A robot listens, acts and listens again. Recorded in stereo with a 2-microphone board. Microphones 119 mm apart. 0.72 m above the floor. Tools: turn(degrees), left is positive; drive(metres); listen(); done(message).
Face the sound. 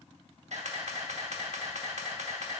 turn(degrees=-70)
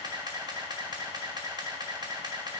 turn(degrees=-35)
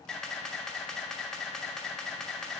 done("Facing the camera shutter, under 1 m away.")